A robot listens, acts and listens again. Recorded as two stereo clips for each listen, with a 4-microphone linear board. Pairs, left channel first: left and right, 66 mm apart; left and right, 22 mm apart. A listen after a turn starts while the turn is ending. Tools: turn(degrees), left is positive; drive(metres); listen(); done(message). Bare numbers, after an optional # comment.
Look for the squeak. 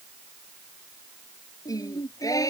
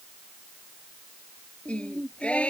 listen()
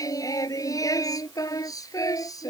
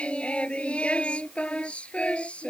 listen()
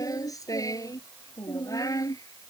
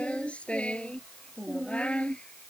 done("I can't make out a squeak to turn to.")